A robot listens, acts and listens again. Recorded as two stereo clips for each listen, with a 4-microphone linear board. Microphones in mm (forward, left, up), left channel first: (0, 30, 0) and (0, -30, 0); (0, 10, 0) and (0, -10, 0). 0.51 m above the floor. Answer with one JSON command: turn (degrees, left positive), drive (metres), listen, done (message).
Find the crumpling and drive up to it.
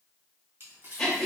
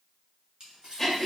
{"turn": -45}
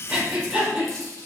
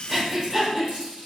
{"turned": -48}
{"turn": -85}
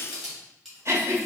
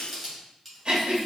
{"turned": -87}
{"drive": 1.0}
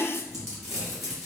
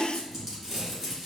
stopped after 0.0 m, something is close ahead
{"done": "Something is in my way. I am facing the crumpling but have not reached it."}